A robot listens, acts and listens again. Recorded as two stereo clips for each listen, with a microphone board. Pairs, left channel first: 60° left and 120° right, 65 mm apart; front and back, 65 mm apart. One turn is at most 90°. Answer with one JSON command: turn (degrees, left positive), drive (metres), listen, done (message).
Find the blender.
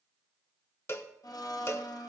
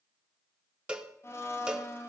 {"turn": 50}
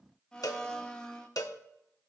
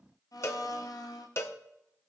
{"turn": -20}
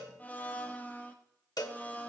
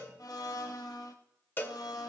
{"done": "Found it: a blender, straight ahead, 1 to 2 m away."}